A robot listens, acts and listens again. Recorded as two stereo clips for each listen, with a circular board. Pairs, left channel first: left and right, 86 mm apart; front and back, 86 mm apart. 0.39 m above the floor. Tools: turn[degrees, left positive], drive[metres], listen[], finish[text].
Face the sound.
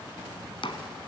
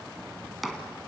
Thought: The chopping: 90° left.
Action: turn[90]
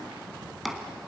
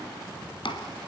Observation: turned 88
Action: finish[Found it: chopping, straight ahead.]